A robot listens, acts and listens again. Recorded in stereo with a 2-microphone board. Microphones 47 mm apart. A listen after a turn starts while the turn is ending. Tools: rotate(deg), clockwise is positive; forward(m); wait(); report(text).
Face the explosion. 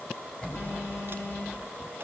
rotate(-20)
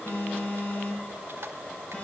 wait()
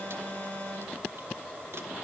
report("I heard an explosion, but can't make it out now. It was about straight ahead or 140° left.")